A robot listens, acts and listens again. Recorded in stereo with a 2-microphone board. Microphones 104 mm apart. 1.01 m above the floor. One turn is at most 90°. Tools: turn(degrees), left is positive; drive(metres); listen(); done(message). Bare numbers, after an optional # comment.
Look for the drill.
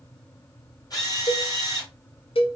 # The drill: about 40° left or 140° left.
turn(40)
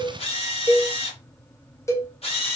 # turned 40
# So it is at 100° left.
turn(90)
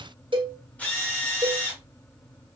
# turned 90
# The drill is now 15° left.
turn(15)
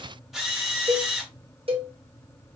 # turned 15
done("Found it: a drill, straight ahead.")